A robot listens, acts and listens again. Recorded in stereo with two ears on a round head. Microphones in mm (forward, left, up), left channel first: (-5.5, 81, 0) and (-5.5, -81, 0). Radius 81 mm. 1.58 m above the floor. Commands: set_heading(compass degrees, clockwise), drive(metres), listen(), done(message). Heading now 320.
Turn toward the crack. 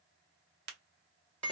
set_heading(20)
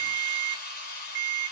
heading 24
listen()
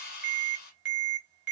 done("I heard a crack, but can't make it out now. It was about 5° left or 55° right.")